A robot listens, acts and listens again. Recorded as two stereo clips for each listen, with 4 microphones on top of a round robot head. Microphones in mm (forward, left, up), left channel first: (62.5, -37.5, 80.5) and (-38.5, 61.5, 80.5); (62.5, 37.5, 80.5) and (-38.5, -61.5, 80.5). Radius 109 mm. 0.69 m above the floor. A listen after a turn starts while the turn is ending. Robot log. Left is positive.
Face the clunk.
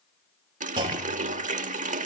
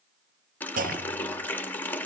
note: The clunk: 165° right.
cmd yaw -165
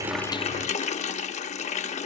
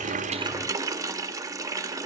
end: Facing where the clunk came from. I can't hear it now.